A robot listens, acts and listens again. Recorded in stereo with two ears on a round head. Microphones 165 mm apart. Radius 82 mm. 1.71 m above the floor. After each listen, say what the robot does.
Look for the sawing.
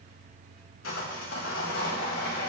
Turn 90° left.
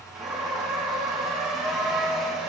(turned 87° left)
Facing the sawing.